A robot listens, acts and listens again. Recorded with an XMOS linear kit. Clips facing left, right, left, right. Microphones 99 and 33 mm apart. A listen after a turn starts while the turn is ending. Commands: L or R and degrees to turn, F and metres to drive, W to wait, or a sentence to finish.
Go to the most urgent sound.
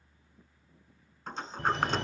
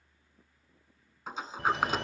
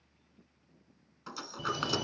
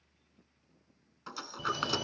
R30
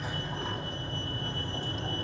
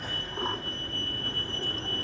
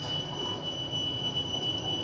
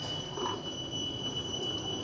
L25
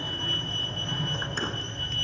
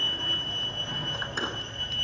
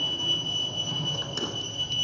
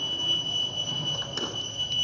F1.0
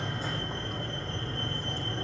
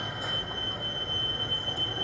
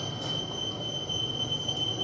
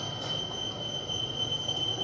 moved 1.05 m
R10
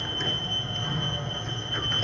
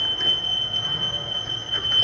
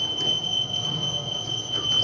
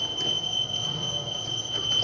F1.0
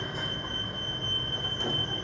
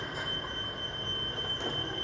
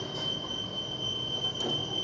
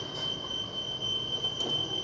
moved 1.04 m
F1.0
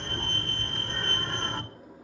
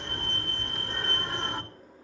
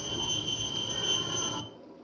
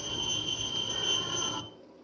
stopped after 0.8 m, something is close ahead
R20
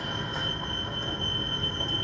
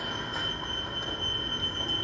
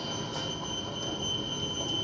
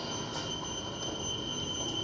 Arrived at the fire alarm, straight ahead.